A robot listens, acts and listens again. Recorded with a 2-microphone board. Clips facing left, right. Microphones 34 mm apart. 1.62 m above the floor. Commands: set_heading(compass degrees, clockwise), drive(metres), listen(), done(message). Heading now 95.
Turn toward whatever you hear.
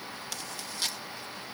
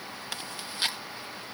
set_heading(130)
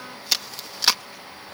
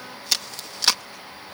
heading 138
done("Found it: chewing, straight ahead.")